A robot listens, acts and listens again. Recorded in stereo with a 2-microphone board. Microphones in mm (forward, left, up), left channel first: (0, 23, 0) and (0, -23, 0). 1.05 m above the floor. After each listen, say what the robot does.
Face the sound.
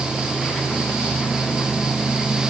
Keep listening.
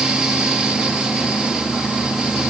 Keep listening.
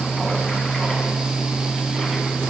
I can't make out anything to turn to.